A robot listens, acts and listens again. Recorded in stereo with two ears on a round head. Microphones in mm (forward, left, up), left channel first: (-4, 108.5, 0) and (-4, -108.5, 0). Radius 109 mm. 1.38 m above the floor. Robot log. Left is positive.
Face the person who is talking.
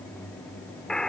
cmd idle
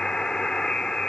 cmd idle
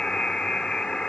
end: I can't make out anyone speaking to turn to.